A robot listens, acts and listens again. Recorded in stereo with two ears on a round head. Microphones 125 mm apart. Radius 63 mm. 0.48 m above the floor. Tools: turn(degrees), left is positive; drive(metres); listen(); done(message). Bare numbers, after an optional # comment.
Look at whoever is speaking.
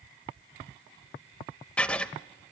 listen()
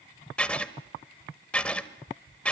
listen()
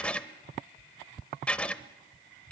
done("I can't make out anyone speaking to turn to.")